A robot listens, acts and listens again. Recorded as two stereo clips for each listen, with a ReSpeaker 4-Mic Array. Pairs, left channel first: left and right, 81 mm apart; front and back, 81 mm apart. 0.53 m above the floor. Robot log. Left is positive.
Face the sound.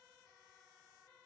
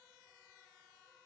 cmd idle
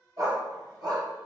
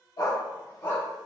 note: The dog barking: 60° right.
cmd yaw -60
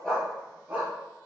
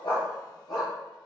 note: The dog barking is now 20° right.
cmd yaw -20
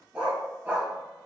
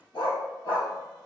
note: The dog barking is now 25° right.
cmd yaw -25
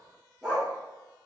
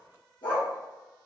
end: Found it: a dog barking, straight ahead, 2 to 4 m away.